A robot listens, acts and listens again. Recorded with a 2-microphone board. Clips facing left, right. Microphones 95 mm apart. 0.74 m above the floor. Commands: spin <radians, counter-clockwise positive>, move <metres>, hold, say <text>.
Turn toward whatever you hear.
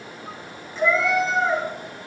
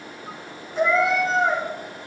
spin -0.96
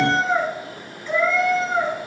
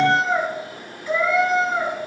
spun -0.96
spin -0.26
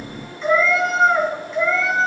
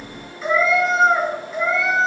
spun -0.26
spin -0.17
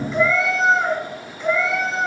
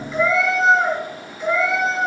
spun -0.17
say Facing the cat meowing.